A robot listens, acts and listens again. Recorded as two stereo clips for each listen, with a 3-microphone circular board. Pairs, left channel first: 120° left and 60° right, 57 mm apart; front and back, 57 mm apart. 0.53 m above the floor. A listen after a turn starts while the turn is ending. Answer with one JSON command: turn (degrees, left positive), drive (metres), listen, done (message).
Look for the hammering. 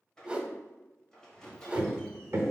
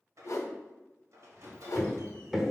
{"turn": -95}
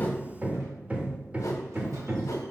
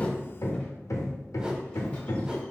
{"done": "Found it: hammering, straight ahead, under 1 m away."}